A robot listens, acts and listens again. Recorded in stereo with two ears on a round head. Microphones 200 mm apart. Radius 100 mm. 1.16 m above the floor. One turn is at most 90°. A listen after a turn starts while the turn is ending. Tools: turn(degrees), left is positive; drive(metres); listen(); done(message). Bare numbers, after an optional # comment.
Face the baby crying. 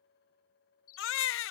# The baby crying: about 60° left or 120° left.
turn(60)
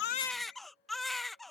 done("Found it: a baby crying, straight ahead.")